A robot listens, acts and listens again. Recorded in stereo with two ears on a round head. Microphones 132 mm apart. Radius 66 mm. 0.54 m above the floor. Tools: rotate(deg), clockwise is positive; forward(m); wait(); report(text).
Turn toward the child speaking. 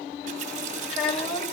rotate(-40)
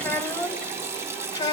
rotate(-25)
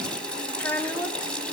rotate(-15)
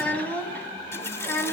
rotate(-15)
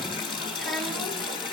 wait()
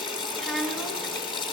report("Found it: a child speaking, straight ahead.")